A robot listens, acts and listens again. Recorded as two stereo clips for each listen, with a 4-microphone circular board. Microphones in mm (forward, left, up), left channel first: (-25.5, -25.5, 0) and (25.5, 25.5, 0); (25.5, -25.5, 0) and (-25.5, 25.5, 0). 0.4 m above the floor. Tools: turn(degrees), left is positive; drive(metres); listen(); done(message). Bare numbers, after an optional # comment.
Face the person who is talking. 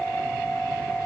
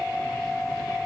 listen()
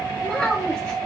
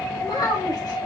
# The child speaking: 55° right.
turn(-55)
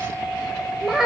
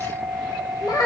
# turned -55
# The child speaking is now 35° right.
turn(-35)
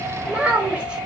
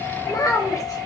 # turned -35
# The child speaking is now 25° right.
turn(-25)
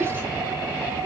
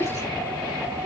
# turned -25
# The child speaking is now 10° right.
turn(-10)
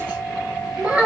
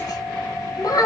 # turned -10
# The child speaking is now 15° right.
turn(-15)
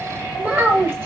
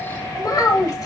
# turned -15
done("Facing the child speaking.")